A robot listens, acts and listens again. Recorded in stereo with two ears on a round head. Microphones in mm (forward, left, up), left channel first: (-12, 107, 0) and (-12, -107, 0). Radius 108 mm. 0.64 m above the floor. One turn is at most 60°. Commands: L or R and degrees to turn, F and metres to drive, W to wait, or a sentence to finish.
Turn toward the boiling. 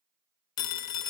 W
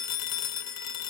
W
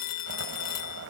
R55
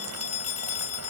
W
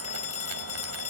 W
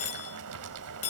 R60
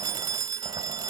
R10
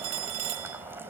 R10
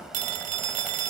Found it: boiling, straight ahead.